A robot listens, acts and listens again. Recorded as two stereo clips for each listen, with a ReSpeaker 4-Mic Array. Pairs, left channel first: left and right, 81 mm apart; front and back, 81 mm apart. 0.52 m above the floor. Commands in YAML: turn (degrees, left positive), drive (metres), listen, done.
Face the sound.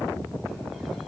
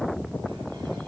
listen: true
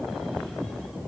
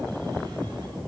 listen: true
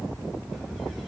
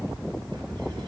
done: "I can't make out anything."